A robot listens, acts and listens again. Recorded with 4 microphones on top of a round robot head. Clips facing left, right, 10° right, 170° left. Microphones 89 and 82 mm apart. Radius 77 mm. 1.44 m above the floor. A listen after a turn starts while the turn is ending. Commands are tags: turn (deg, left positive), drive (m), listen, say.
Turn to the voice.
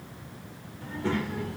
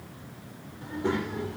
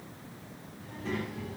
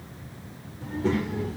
<turn deg="-155"/>
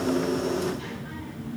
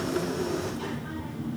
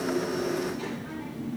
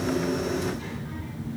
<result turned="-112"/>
<turn deg="-15"/>
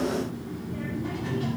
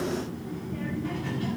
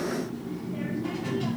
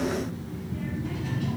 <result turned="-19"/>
<turn deg="20"/>
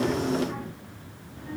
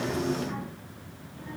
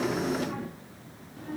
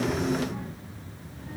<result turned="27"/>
<turn deg="20"/>
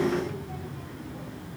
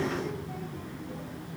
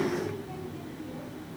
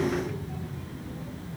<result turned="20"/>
<say>Facing the child speaking.</say>